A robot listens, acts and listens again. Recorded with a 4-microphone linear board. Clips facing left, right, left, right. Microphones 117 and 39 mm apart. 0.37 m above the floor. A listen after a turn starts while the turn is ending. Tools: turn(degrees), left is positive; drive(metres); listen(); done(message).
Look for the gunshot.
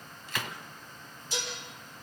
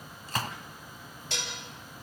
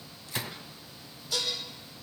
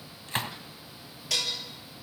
turn(degrees=-40)
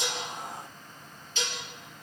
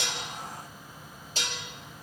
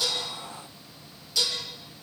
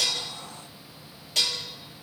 listen()
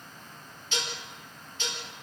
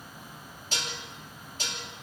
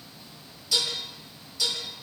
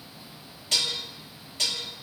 done("I heard a gunshot, but can't make it out now. It was about straight ahead or 100° right.")